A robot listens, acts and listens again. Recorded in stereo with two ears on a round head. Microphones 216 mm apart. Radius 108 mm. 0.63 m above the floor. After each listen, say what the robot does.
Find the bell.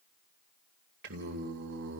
Keep listening.
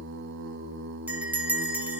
Turn 30° right.
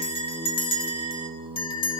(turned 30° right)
Turn 25° left.
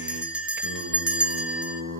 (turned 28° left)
Found it: a bell, straight ahead, 2 to 4 m away.